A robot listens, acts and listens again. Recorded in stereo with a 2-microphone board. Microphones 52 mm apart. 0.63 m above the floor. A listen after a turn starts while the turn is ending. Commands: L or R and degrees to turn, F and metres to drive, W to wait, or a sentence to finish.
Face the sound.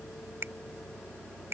R55
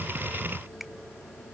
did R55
W
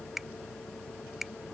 Found it: a finger snap, straight ahead.